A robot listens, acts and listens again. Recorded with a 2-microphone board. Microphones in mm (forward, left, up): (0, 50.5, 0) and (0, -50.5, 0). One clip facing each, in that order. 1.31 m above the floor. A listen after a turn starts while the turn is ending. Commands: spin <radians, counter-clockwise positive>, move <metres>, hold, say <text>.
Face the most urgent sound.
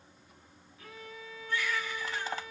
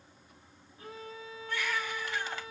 spin -1.22
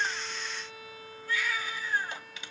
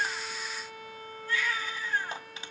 spin -0.61
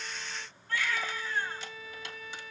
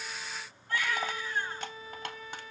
spin -0.26
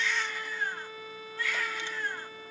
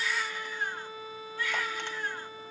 say Found it: a baby crying, straight ahead.